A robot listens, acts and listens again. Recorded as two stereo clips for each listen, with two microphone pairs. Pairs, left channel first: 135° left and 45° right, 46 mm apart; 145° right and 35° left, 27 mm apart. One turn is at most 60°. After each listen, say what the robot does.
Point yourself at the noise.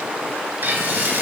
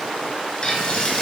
Turn 60° right.
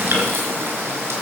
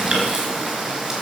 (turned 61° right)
Turn 20° right.
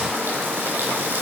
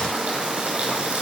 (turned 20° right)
Facing the frying, over 4 m away.